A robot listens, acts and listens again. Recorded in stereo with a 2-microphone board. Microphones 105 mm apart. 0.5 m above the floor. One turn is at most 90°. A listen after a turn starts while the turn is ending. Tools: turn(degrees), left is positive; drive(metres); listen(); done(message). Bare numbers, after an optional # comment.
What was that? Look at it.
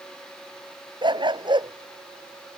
# The dog barking: about 50° right or 130° right.
turn(-50)
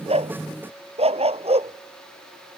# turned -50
# So it is at 80° right.
turn(-80)
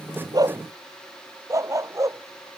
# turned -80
# The dog barking is now 30° right.
turn(-30)
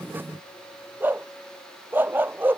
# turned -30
# The dog barking is now 20° right.
turn(-20)
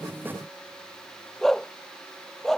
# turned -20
done("Facing the dog barking.")